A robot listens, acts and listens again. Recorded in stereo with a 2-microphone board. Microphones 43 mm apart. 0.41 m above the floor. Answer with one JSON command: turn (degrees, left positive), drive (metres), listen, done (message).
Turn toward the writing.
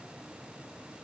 {"listen": true}
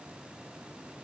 {"listen": true}
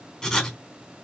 {"turn": 30}
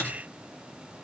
{"turn": 140}
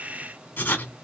{"turn": 45}
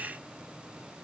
{"listen": true}
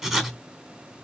{"done": "Facing the writing."}